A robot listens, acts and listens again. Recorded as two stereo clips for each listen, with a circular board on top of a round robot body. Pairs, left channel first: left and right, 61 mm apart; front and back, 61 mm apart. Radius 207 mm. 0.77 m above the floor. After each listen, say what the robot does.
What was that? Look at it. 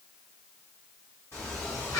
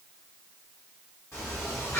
Turn 60° left.
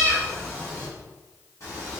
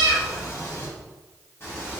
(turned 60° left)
Turn 60° left.
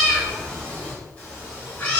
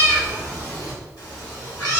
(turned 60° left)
Turn 30° left.
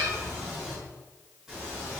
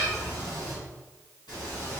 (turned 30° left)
Facing the cat meowing, 1 to 2 m away.